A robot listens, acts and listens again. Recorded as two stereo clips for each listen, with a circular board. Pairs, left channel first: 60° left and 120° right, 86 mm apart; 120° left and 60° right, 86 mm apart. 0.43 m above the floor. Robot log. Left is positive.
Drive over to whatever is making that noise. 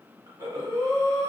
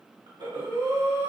note: The breathing: 75° right.
cmd yaw -75
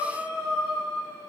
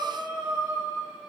cmd fwd 1.0
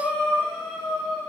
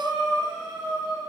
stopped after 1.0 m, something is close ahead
note: The breathing is now 10° right.
cmd yaw -10
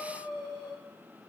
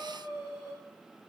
end: I am next to the breathing.